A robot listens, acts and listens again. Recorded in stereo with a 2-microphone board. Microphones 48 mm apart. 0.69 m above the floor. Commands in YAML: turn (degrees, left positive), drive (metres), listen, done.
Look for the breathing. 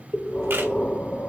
turn: 35
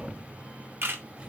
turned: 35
done: "Facing the breathing, 1 to 2 m away."